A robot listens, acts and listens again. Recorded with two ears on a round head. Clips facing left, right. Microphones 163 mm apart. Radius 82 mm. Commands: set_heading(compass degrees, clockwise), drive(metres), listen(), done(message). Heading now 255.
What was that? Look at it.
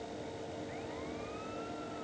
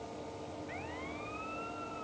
listen()
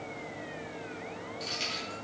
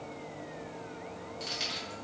set_heading(285)
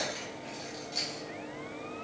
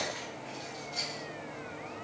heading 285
set_heading(240)
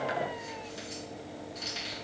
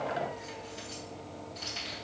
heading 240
set_heading(220)
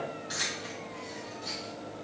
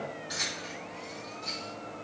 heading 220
done("Facing the keys jangling, 2 to 4 m away.")